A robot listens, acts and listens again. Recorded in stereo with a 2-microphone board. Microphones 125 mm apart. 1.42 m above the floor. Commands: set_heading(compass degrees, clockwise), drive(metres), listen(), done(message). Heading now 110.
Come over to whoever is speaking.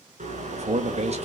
set_heading(170)
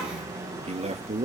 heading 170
set_heading(225)
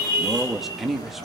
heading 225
drive(1.0)
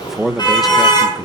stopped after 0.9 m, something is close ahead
done("Arrived at the man speaking, straight ahead.")